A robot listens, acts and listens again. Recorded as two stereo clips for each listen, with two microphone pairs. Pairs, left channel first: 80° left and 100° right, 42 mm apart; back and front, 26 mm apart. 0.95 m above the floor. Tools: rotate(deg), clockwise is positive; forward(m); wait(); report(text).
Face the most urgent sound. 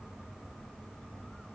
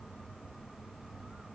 wait()
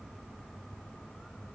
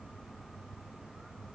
wait()
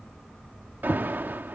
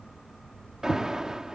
rotate(65)
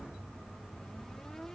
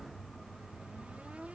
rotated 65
wait()
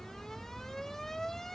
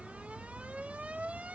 report("Facing the alarm.")